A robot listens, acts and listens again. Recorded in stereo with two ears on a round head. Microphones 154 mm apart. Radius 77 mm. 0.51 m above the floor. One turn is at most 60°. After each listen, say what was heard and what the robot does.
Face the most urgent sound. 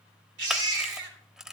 Turn 60° right.
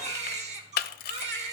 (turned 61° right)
So it is at 40° right. Turn 40° right.
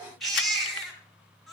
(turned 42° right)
Facing the baby crying, 2 to 4 m away.